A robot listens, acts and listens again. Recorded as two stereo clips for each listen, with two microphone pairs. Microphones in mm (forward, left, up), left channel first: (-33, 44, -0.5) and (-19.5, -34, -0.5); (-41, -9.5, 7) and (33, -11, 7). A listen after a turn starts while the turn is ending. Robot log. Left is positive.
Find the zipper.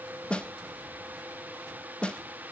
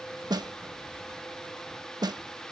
cmd idle
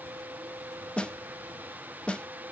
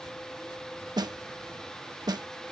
cmd idle
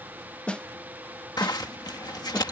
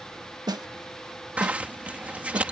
note: The zipper: 70° left.
cmd yaw +70
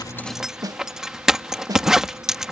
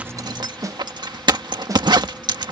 end: Facing the zipper.